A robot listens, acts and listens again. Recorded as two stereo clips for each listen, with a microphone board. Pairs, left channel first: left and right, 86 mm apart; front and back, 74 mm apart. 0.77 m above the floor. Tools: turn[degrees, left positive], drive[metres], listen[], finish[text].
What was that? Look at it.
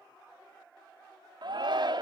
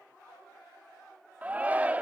Thought: The shout: 110° right.
Action: turn[-110]
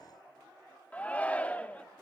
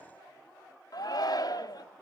Thought: The shout is now 20° left.
Action: turn[20]
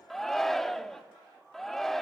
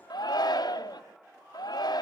Action: finish[Facing the shout, 1 to 2 m away.]